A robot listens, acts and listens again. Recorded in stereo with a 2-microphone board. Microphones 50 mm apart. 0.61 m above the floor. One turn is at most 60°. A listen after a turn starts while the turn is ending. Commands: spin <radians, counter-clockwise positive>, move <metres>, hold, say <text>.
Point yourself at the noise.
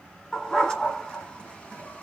spin 0.26
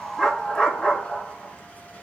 spin 0.35
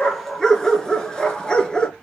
spin 0.26
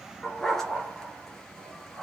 spin 0.52
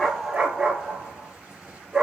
spin -0.35
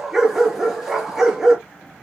spin -0.17
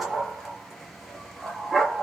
say Facing the dog barking.